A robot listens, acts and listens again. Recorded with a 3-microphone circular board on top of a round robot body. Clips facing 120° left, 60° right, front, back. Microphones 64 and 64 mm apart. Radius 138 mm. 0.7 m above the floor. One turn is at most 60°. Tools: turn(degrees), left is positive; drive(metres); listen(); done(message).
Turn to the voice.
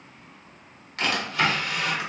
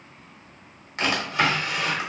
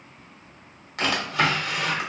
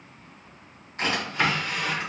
listen()
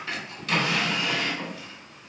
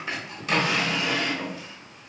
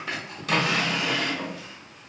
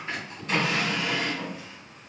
listen()
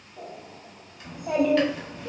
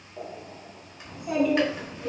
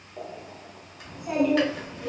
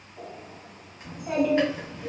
turn(degrees=60)
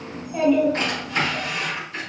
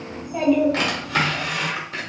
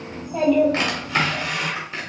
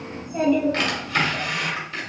turn(degrees=25)
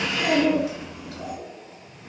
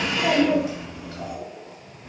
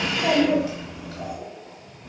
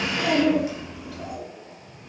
turn(degrees=-10)
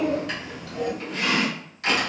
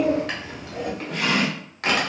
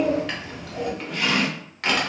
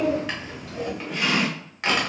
done("Found it: a child speaking, straight ahead, 1 to 2 m away.")